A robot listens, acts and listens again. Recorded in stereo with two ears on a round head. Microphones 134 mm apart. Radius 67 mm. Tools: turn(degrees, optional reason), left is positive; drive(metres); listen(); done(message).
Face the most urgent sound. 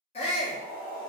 turn(degrees=40, reason="The shout: about 40° left or 140° left.")
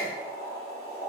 done("Facing the shout, under 1 m away.")